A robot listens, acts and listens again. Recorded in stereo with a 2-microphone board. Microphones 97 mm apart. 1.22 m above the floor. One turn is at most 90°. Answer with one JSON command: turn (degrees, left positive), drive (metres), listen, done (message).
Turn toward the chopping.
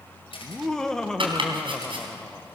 {"turn": -60}
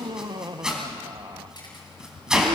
{"done": "Facing the chopping."}